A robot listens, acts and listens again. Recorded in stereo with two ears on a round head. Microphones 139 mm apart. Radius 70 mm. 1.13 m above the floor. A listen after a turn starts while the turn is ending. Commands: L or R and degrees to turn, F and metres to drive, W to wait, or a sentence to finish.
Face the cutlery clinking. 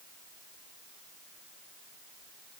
W
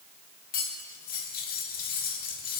L65
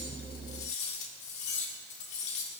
L45
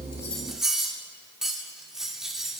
Facing the cutlery clinking.